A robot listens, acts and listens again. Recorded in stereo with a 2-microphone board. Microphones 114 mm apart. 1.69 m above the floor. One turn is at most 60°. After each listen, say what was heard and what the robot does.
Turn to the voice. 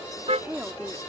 The woman speaking: about 15° right or 165° right. Turn 15° right.
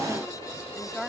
Found it: a woman speaking, straight ahead.